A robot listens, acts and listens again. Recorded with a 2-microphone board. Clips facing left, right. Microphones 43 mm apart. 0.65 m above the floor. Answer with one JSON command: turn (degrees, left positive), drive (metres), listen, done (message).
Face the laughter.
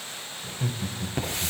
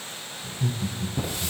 {"turn": 45}
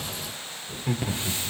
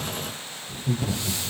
{"turn": 120}
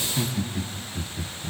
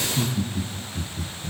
{"turn": 50}
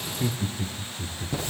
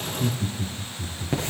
{"turn": 55}
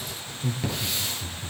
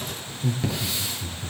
{"done": "Facing the laughter, 1 to 2 m away."}